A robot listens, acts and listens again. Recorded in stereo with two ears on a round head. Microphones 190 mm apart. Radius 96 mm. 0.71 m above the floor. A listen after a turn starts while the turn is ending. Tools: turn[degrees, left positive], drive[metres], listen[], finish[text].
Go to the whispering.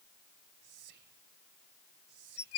Thought: The whispering: about 60° right or 120° right.
Action: turn[-60]
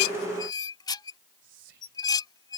Thought: So it is at 60° right.
Action: turn[-60]
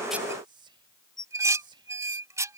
Thought: The whispering is now 25° right.
Action: turn[-25]
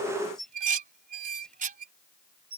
Action: listen[]
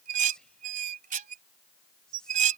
Action: drive[1.0]
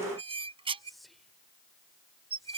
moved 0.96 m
Action: drive[1.0]
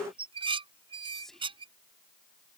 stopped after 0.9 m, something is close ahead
Action: finish[Arrived at the whispering, straight ahead.]